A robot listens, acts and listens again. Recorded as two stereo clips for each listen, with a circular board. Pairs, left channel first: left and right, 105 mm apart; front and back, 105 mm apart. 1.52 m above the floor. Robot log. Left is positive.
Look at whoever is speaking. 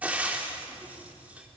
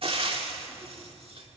cmd idle
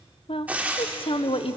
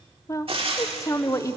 note: The woman speaking: 60° left.
cmd yaw +60
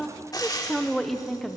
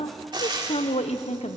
end: Facing the woman speaking.